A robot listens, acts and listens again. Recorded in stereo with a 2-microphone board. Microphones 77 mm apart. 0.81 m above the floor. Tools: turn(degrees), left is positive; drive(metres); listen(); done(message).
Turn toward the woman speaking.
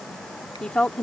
turn(degrees=30)
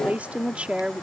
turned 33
turn(degrees=-15)
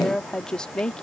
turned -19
turn(degrees=10)
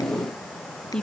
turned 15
turn(degrees=10)
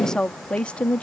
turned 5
turn(degrees=15)
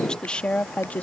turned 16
turn(degrees=20)
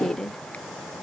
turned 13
done("Facing the woman speaking.")